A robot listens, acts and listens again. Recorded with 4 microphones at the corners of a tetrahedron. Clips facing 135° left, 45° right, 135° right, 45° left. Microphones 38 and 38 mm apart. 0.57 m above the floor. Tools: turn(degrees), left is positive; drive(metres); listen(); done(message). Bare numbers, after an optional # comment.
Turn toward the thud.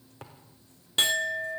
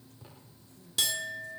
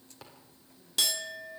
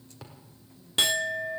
# The thud: 135° left.
turn(135)
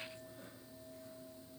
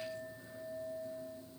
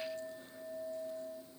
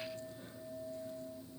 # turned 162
# Nothing new. It was at 30° right.
turn(-30)
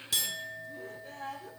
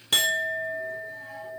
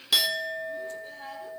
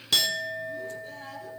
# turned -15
# Nothing new. It was at 15° right.
turn(-15)
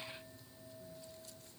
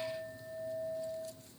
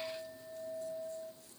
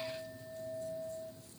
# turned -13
done("Facing where the thud came from. I can't hear it now.")